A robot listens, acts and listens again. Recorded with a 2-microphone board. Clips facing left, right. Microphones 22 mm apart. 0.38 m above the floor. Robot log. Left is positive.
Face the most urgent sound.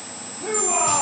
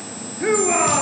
note: The shout: about 60° right or 120° right.
cmd yaw -60
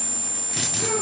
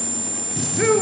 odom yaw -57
note: So it is at 60° right.
cmd yaw -60
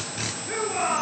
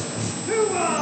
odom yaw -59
end: Facing the shout, over 4 m away.